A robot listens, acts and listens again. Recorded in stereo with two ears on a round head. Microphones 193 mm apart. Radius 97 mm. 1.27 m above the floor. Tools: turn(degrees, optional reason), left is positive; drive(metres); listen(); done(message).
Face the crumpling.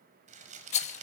turn(degrees=-35, reason="The crumpling: about 35° right or 145° right.")
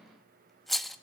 listen()
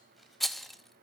listen()
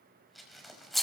done("Found it: crumpling, straight ahead.")